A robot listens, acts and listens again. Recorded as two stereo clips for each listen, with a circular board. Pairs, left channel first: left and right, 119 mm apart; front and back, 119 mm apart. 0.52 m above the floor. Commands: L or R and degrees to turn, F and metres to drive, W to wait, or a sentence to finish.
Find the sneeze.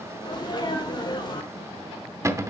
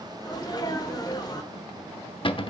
L45
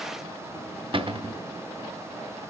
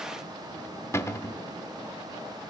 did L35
L10
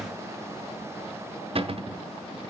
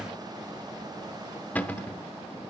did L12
Facing where the sneeze came from. I can't hear it now.